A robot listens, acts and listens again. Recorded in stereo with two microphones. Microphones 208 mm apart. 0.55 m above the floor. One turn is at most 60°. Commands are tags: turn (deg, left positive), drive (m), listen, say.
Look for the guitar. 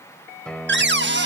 <turn deg="30"/>
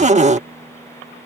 <listen/>
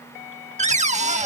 <listen/>
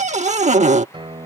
<turn deg="-25"/>
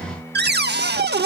<say>Facing the guitar.</say>